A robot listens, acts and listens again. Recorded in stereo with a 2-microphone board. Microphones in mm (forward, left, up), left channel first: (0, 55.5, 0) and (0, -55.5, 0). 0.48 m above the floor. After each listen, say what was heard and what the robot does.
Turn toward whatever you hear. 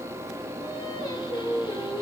The singing: about 45° left or 135° left. Turn 45° left.
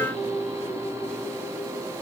So it is at 100° left. Turn 100° left.
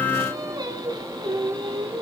The singing is now 45° right. Turn 45° right.
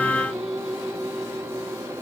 Found it: singing, straight ahead, 2 to 4 m away.